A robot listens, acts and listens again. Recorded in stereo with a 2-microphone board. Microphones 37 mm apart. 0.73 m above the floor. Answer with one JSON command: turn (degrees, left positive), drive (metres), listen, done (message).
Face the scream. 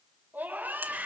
{"turn": -55}
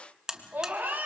{"turn": -65}
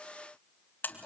{"turn": 30}
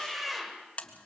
{"done": "Found it: a scream, straight ahead."}